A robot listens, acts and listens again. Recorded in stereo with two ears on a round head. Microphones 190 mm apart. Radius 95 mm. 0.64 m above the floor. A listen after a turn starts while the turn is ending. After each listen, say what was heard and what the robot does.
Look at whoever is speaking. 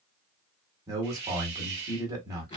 The man speaking: about 20° right or 160° right. Turn 20° right.
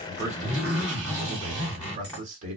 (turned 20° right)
So it is at 140° right. Turn 140° right.
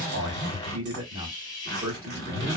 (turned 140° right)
The man speaking is now 25° right. Turn 25° right.
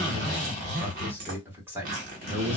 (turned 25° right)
The man speaking is now 10° right. Turn 10° right.
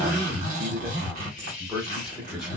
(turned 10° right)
Found it: a man speaking, straight ahead.